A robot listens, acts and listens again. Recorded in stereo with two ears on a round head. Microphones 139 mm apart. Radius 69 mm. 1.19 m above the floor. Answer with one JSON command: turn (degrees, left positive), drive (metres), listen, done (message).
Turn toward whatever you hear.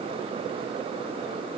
{"listen": true}
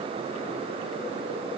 {"listen": true}
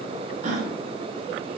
{"turn": -50}
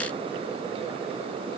{"listen": true}
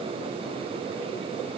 {"done": "I heard a gasp, but can't make it out now. It was about straight ahead or 80° right."}